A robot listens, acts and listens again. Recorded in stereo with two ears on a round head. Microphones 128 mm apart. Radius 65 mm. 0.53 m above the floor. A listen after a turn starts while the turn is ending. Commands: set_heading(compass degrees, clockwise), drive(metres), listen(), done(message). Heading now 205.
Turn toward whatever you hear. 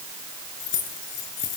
set_heading(155)
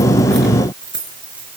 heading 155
set_heading(165)
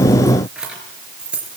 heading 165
set_heading(175)
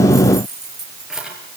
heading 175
done("Facing the keys jangling, over 4 m away.")